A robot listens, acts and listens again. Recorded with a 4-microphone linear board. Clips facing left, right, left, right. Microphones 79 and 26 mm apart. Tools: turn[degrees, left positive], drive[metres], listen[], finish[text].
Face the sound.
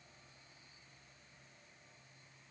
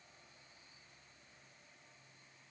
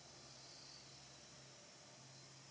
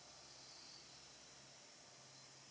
Action: listen[]
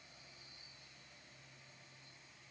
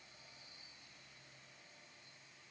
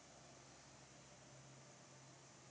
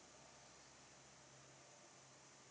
Action: listen[]
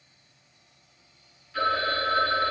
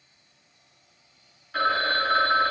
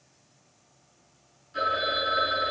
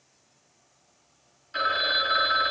Thought: The phone ringing: about 70° right or 110° right.
Action: turn[-70]
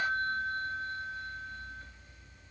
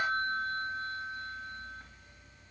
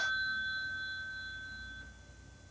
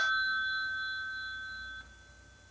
Thought: So it is at 40° right.
Action: turn[-40]
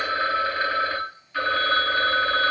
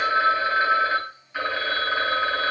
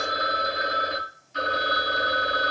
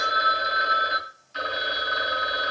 Thought: The phone ringing is now 10° right.
Action: turn[-10]
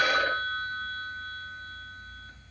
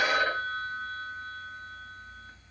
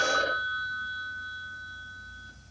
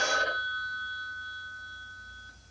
Action: finish[Facing the phone ringing.]